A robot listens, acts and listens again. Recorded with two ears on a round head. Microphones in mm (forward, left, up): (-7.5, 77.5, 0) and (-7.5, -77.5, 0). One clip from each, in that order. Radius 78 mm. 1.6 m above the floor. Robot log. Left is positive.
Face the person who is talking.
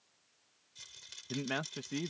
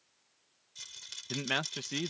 note: The man speaking: about 65° right or 115° right.
cmd yaw -65
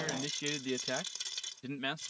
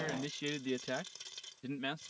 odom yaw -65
note: So it is at 20° left.
cmd yaw +20
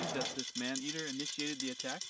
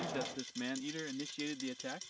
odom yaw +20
note: The man speaking is now 20° left.
cmd yaw +20
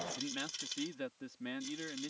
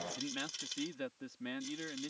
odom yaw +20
end: Found it: a man speaking, straight ahead.